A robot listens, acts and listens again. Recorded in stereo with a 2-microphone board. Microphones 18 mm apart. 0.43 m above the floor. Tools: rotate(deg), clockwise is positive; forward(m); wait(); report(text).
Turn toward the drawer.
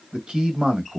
wait()
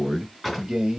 rotate(30)
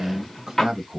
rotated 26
rotate(-15)
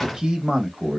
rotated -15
report("Found it: a drawer, straight ahead, 2 to 4 m away.")